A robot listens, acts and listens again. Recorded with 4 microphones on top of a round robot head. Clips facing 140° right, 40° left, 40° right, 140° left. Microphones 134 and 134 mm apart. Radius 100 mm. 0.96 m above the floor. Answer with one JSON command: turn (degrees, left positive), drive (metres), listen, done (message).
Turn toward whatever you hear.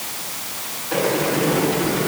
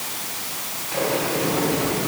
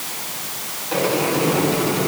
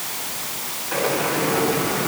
{"turn": -100}
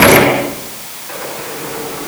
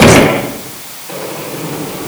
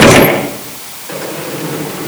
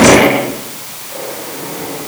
{"turn": -25}
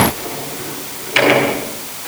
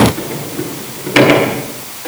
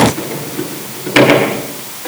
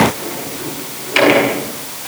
{"done": "Found it: a sliding door, straight ahead."}